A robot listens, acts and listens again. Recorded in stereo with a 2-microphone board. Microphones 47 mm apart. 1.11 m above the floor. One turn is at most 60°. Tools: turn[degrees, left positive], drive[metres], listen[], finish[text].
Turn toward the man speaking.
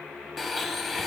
Action: listen[]
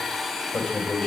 Thought: The man speaking: about 15° left or 165° left.
Action: turn[15]
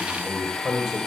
Action: turn[30]
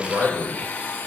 Thought: So it is at 30° right.
Action: turn[-30]
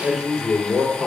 Thought: The man speaking is now 15° right.
Action: turn[-15]
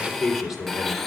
Action: finish[Found it: a man speaking, straight ahead.]